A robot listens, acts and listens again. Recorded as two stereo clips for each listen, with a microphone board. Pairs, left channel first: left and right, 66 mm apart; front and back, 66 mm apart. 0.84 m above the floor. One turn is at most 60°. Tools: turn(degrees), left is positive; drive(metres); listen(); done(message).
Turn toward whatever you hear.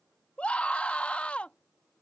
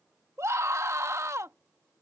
turn(degrees=60)
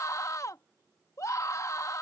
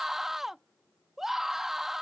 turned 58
turn(degrees=60)
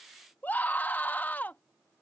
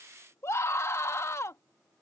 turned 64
turn(degrees=35)
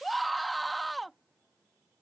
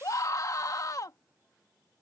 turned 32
done("Found it: a scream, straight ahead.")